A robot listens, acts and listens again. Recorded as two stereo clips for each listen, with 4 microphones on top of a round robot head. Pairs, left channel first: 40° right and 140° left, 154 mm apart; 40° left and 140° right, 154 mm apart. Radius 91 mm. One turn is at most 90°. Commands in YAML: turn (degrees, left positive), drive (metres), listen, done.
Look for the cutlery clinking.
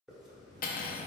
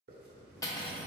turn: -25
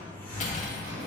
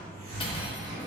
listen: true
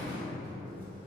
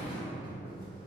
listen: true
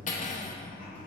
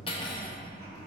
turn: -10
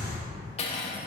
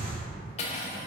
done: "Facing the cutlery clinking."